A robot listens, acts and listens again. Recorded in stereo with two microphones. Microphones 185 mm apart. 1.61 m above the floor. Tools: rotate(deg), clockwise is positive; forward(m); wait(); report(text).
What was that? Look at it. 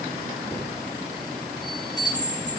rotate(-25)
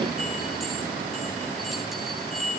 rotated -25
report("Facing the chime.")